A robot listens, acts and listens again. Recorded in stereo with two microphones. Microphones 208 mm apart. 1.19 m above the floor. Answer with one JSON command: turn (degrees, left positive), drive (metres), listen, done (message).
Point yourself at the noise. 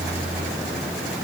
{"listen": true}
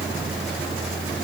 {"listen": true}
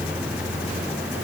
{"done": "I can't make out anything."}